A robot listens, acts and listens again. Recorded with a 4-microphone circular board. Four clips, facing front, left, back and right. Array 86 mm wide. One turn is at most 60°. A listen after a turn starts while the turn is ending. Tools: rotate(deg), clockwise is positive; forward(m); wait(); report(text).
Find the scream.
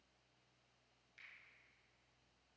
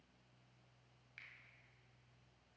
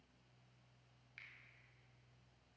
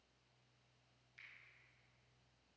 wait()
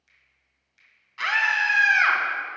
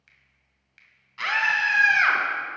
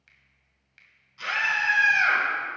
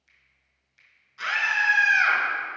rotate(-35)
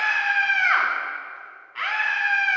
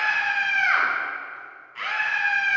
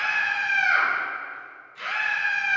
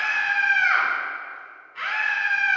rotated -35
report("Found it: a scream, straight ahead, 2 to 4 m away.")